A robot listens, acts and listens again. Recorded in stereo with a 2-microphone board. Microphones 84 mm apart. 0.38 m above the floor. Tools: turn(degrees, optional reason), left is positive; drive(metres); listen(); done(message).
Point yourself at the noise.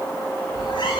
turn(degrees=65, reason="The cat meowing: about 65° left or 115° left.")
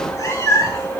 turn(degrees=35, reason="So it is at 35° left.")
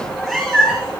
done("Facing the cat meowing, 2 to 4 m away.")